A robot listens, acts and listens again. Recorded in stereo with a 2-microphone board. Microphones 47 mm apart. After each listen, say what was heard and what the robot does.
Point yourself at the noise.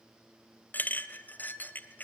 The clink: about 40° left or 140° left. Turn 40° left.
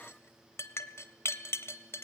So it is at 95° left. Turn 95° left.
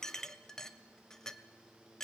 The clink is now 10° left. Turn 10° left.
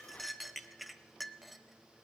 Found it: a clink, straight ahead, 1 to 2 m away.